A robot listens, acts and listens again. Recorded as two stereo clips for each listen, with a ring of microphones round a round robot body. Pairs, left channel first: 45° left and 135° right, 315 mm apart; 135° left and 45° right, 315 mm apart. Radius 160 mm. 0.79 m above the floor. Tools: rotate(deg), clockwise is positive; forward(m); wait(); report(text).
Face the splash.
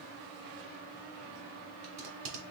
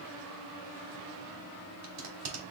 wait()
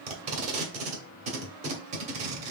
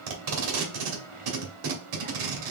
wait()
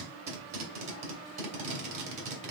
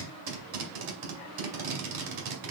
report("I can't make out a splash, only tape being pulled.")